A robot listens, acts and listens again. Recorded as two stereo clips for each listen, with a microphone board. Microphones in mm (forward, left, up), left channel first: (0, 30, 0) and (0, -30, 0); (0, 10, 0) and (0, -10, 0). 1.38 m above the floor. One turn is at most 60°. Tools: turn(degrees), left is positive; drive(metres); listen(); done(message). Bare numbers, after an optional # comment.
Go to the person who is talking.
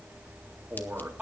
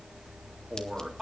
# The man speaking: about 25° right or 155° right.
turn(-25)
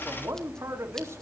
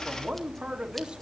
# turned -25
# So it is at 135° right.
turn(-60)
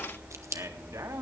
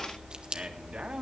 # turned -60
# The man speaking is now 70° right.
turn(-60)
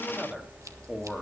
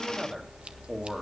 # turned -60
drive(1.0)
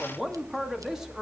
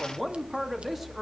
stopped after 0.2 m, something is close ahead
# The man speaking is now 10° right.
turn(-10)
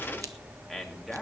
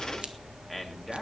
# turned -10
done("Something is in my way. I am facing the man speaking but have not reached it.")